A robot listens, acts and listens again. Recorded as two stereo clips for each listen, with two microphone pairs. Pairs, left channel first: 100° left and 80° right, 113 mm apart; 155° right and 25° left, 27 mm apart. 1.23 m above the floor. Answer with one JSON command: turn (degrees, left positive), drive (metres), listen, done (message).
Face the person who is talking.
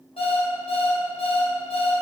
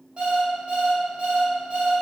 {"listen": true}
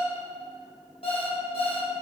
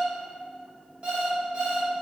{"listen": true}
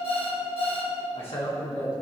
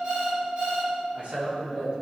{"turn": 60}
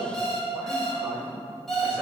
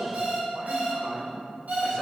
{"done": "Found it: a man speaking, straight ahead."}